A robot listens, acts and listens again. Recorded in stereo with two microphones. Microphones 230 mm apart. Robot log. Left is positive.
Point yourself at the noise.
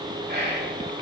note: The whispering: about 45° right or 135° right.
cmd yaw -45
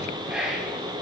end: Facing the whispering, 2 to 4 m away.